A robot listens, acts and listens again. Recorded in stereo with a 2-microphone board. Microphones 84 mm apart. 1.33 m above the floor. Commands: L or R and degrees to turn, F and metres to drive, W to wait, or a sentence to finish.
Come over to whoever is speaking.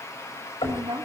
R90
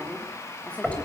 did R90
L15
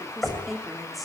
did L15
F1.0
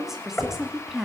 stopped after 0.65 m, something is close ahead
Blocked. The woman speaking is further on, straight ahead.